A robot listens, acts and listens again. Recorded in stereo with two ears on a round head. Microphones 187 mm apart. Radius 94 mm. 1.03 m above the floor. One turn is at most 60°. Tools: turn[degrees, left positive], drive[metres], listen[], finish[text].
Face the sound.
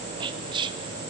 Thought: The whispering: about 20° right or 160° right.
Action: turn[-20]
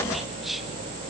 Action: finish[Found it: whispering, straight ahead.]